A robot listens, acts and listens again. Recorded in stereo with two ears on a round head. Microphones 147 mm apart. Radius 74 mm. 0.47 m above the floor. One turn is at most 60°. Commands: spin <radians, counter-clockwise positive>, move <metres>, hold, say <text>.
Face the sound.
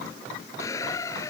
spin 0.35
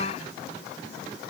hold
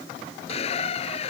spin 1.05
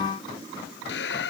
spin 1.05
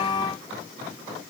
spin 0.35
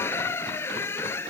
spin 0.26
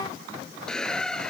say Facing the squeak.